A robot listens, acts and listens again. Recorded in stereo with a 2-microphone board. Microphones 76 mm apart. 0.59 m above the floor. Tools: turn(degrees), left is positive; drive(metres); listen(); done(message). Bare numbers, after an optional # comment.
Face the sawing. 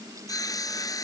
# The sawing: about 50° left or 130° left.
turn(50)
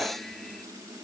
listen()
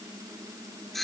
done("Found it: sawing, straight ahead.")